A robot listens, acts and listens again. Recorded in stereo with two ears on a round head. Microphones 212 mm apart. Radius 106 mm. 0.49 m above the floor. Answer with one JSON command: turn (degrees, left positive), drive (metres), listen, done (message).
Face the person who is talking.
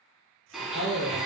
{"turn": 70}
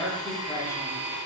{"turn": 10}
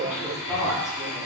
{"done": "Facing the woman speaking."}